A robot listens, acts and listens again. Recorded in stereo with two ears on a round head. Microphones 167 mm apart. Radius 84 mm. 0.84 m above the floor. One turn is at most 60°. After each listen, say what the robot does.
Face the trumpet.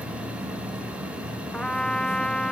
Turn 30° left.
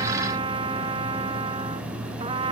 Turn 25° right.
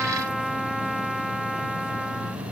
Facing the trumpet.